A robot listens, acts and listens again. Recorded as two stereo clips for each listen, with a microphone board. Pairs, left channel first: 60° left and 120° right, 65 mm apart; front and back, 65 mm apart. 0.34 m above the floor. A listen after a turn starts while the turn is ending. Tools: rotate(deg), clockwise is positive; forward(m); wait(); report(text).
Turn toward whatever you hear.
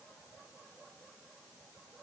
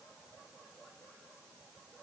wait()
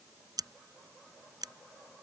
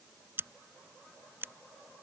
rotate(125)
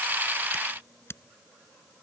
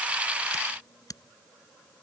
rotate(-15)
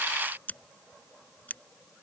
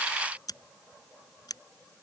report("Facing the scissors.")